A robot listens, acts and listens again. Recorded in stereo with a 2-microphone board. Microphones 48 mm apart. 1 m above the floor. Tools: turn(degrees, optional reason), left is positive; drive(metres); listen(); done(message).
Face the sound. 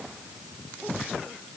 listen()
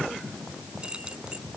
turn(degrees=-20, reason="The keys jangling: about 20° right or 160° right.")
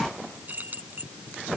turn(degrees=-40, reason="The keys jangling: about 40° right or 140° right.")
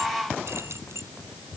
turn(degrees=-105, reason="So it is at 105° right.")
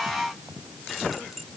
done("Facing the keys jangling.")